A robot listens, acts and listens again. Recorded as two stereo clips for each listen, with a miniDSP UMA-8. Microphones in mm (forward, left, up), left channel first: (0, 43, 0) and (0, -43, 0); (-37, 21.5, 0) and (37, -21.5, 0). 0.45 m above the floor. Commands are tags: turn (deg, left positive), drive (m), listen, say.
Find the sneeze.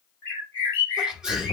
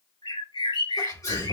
<turn deg="-170"/>
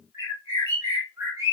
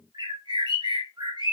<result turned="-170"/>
<say>I heard a sneeze from this way, but can't make it out now.</say>